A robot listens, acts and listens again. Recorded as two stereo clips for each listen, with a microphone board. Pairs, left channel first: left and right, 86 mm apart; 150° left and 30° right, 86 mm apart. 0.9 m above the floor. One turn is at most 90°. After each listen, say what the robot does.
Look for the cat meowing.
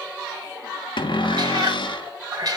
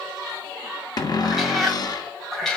Turn 90° right.
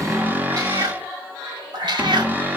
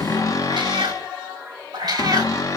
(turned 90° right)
Turn 70° right.
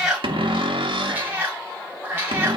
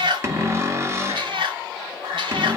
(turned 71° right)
Turn 25° right.
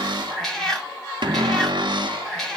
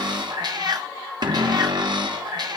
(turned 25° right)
Found it: a cat meowing, straight ahead.